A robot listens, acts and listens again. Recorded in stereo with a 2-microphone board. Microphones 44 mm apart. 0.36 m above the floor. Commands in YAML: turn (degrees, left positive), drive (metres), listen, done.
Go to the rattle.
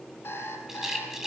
turn: -30
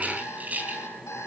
turn: -140
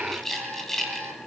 drive: 1.0
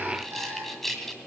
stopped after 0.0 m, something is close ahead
done: "Something is in my way. I am facing the rattle but have not reached it."